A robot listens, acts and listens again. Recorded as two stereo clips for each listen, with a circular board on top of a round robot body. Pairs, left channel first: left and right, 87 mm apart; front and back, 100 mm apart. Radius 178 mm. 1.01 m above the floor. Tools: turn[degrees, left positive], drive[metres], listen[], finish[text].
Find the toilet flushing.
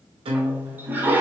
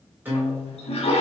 Thought: The toilet flushing: 20° right.
Action: turn[-20]
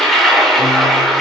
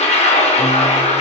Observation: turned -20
Action: finish[Found it: a toilet flushing, straight ahead.]